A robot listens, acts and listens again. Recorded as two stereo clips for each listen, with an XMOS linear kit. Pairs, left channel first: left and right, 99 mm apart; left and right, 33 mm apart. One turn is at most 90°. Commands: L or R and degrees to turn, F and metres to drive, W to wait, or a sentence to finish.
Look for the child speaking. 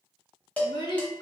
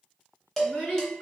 L60
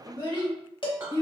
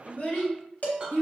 L55
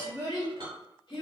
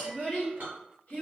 L50
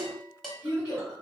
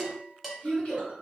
L35
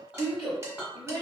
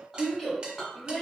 Facing the child speaking, 1 to 2 m away.